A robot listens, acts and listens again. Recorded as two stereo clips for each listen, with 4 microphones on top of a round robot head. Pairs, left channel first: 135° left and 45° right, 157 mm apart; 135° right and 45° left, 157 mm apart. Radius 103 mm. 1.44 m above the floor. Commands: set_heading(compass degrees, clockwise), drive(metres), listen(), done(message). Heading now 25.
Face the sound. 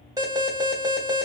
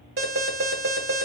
set_heading(0)
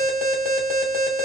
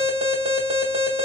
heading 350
set_heading(0)
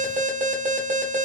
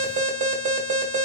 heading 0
done("Found it: an alarm, straight ahead.")